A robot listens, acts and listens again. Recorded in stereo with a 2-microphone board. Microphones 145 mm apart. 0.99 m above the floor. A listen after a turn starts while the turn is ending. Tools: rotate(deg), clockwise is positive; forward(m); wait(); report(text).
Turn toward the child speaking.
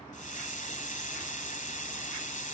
wait()
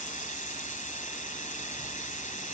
wait()
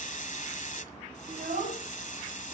rotate(60)
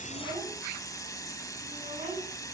rotate(65)
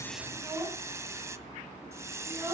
rotate(15)
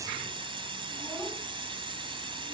wait()
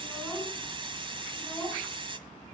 report("Found it: a child speaking, straight ahead, over 4 m away.")